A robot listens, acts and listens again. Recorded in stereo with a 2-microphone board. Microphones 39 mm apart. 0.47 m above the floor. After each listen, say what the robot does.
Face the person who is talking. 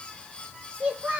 Turn 30° right.
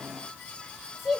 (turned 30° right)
Facing the child speaking.